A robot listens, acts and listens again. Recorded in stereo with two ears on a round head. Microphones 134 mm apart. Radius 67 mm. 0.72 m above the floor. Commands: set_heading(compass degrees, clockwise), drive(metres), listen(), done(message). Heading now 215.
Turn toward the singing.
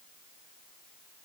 listen()
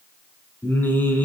set_heading(185)
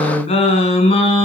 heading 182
set_heading(42)
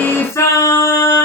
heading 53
set_heading(28)
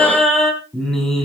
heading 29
done("Facing the singing, over 4 m away.")